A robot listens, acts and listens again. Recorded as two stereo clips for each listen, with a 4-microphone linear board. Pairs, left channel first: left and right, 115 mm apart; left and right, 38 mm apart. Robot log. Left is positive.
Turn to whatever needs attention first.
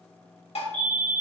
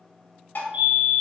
note: The fire alarm: about 40° right or 140° right.
cmd yaw -40
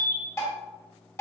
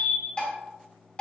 end: Facing the fire alarm, 2 to 4 m away.